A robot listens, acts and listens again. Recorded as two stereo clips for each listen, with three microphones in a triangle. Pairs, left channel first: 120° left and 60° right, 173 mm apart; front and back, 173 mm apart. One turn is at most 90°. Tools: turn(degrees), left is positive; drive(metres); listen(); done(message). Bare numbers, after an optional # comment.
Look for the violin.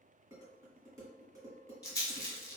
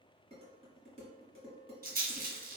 listen()
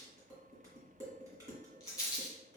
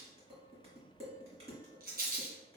listen()
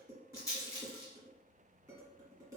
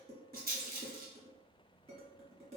done("I can't make out a violin, only a rattle and dishes clattering.")